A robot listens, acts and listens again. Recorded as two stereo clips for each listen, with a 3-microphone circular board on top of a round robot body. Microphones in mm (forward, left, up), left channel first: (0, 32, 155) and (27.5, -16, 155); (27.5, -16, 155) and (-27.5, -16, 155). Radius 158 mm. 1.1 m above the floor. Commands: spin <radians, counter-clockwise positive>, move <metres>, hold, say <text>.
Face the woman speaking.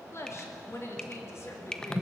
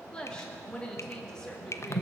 spin 1.31
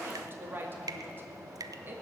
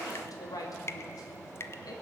say Found it: a woman speaking, straight ahead, 2 to 4 m away.